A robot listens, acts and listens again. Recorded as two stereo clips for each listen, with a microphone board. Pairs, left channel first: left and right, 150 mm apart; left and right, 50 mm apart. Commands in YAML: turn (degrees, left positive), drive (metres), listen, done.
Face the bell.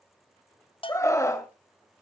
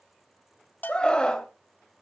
turn: 40
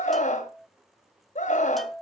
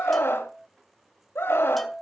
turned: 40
done: "Facing the bell, under 1 m away."